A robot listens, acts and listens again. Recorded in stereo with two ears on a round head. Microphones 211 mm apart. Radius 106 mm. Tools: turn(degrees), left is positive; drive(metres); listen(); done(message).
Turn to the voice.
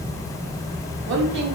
turn(degrees=-50)
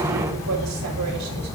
listen()
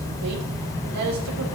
turn(degrees=-75)
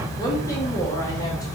listen()
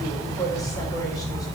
turn(degrees=15)
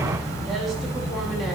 listen()
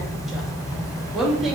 done("Found it: a woman speaking, straight ahead.")